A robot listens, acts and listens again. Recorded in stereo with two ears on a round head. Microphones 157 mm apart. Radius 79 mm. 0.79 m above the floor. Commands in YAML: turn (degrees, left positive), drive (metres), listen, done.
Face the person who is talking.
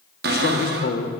turn: 65
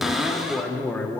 turn: 10
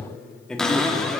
done: "Found it: a man speaking, straight ahead, 1 to 2 m away."